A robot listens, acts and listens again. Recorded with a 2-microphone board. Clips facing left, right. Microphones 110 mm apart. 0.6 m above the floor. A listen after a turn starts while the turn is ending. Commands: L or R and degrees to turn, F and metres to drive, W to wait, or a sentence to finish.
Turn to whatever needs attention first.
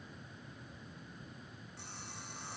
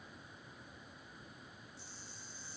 W
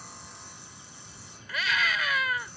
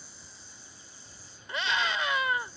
R25
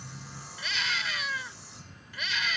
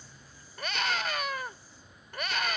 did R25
R125
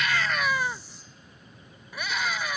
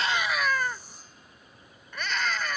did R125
L10
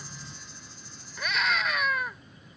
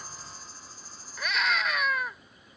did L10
Found it: a scream, straight ahead.